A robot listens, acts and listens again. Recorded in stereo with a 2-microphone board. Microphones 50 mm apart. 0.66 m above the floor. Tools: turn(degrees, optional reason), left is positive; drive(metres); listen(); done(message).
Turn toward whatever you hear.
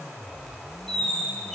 turn(degrees=30)
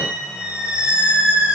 turn(degrees=-20, reason="So it is at 20° right.")
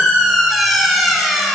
done("Facing the squeak.")